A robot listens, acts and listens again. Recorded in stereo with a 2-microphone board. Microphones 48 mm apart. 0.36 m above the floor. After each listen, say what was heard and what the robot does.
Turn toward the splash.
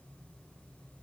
Keep listening.
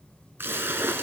The splash: about 60° right or 120° right. Turn 60° right.
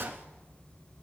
Keep listening.
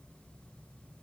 I heard a splash, but can't make it out now. It was about straight ahead or 60° right.